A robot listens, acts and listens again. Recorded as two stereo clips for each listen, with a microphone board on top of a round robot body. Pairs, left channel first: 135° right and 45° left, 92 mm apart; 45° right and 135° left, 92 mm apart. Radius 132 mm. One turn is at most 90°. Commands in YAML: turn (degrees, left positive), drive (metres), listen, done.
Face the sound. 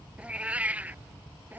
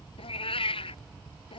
turn: -30
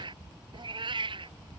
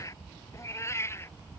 turn: 15
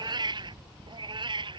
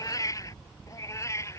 turn: 15
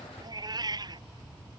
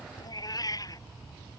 done: "Facing the cat meowing."